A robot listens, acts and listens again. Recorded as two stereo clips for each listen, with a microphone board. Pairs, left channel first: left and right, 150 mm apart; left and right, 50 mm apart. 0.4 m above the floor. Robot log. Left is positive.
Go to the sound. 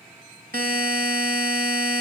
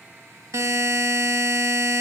note: The buzzer: about 70° right or 110° right.
cmd yaw -70
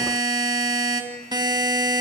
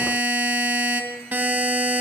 note: So it is at 30° right.
cmd yaw -30
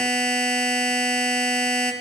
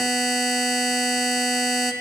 cmd fwd 1.0
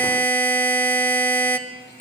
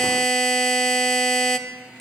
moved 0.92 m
note: The buzzer is now 10° left.
cmd yaw +10
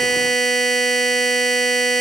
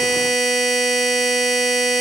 cmd fwd 1.0
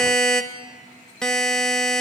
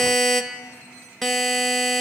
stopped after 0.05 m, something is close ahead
end: Arrived at the buzzer, straight ahead.